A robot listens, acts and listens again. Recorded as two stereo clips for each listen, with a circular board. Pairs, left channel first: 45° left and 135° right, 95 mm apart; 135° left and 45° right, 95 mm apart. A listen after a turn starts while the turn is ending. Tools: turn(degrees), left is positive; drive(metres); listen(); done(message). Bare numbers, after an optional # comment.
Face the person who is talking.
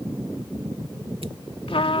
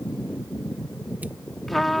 listen()
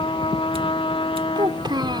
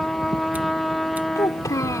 # The child speaking: 175° right.
turn(-175)
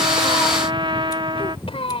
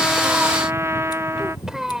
# The child speaking is now 40° left.
turn(40)
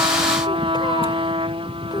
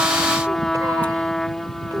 listen()
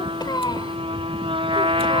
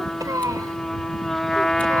done("Facing the child speaking.")